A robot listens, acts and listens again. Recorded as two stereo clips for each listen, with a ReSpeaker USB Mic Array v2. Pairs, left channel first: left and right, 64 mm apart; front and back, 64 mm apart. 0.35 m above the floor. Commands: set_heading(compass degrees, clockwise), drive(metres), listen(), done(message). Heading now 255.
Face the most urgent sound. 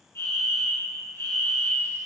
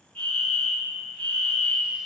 set_heading(195)
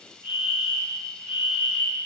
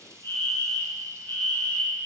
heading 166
set_heading(196)
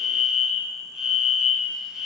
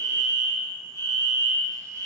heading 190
done("Facing the fire alarm.")